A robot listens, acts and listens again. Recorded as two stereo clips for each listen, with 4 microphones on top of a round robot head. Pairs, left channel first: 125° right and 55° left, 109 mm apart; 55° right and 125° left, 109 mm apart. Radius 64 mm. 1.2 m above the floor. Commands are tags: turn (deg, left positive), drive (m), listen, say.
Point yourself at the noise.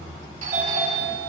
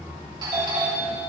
<turn deg="70"/>
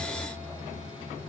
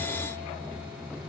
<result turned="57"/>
<turn deg="15"/>
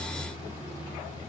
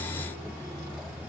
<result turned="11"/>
<listen/>
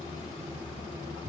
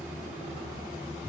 <say>Found it: a doorbell, straight ahead, 2 to 4 m away.</say>